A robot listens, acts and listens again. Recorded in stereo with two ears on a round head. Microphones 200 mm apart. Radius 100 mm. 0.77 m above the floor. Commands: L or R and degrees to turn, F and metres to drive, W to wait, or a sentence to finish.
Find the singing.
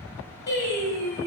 L50
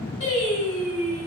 L80
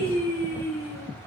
L10
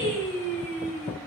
Facing the singing, over 4 m away.